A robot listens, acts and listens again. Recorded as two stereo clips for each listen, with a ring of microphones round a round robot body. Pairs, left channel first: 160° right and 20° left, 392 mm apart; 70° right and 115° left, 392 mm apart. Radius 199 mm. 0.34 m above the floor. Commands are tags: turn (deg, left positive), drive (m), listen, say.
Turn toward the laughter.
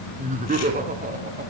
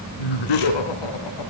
<turn deg="-45"/>
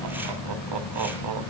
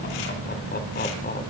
<listen/>
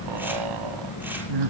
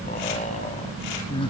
<turn deg="10"/>
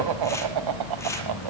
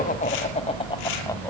<turn deg="15"/>
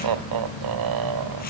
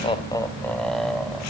<turn deg="20"/>
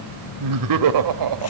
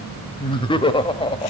<say>Found it: laughter, straight ahead, 1 to 2 m away.</say>